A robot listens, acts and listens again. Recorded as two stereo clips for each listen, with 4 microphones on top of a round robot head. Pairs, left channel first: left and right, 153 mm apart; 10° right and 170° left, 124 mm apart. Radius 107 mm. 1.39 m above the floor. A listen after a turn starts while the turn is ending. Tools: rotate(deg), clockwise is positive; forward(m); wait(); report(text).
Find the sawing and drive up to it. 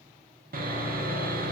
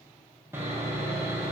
rotate(115)
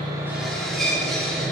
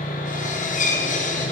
forward(1.0)
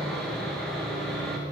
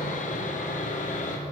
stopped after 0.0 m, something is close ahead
report("Something is in my way. I am facing the sawing but have not reached it.")